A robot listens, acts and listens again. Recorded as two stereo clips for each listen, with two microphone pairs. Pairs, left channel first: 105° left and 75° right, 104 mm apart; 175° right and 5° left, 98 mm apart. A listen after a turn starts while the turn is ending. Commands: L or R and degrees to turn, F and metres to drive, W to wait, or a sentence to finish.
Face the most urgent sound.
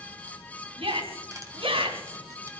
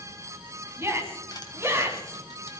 R55
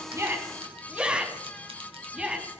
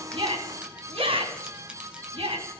Found it: a shout, straight ahead, 2 to 4 m away.